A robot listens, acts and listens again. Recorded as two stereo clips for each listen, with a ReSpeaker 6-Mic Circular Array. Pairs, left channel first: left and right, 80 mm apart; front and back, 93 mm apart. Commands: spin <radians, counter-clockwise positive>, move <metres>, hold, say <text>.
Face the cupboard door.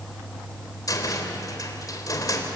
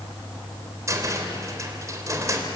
spin 2.18
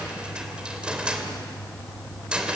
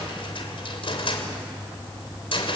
spin -0.26
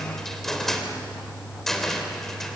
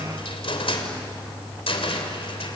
say Found it: a cupboard door, straight ahead.